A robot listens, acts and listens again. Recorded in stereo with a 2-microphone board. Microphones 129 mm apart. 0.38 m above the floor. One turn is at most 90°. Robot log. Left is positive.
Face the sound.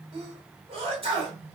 note: The sneeze: about 45° right or 135° right.
cmd yaw -45
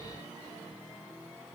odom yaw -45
cmd idle
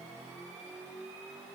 end: I heard a sneeze, but can't make it out now. It was about straight ahead or 90° right.